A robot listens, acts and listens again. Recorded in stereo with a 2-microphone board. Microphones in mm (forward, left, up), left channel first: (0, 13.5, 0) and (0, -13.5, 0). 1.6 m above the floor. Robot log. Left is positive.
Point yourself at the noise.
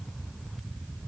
cmd idle
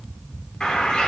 note: The bird: about 35° left or 145° left.
cmd yaw +35
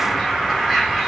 end: Found it: a bird, straight ahead.